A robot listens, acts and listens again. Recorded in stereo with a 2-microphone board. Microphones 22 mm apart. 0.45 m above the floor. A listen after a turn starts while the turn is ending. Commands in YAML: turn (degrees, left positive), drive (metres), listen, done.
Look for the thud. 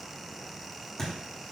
turn: 20
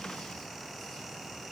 listen: true
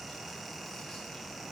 done: "I heard a thud, but can't make it out now. It was about straight ahead or 140° left."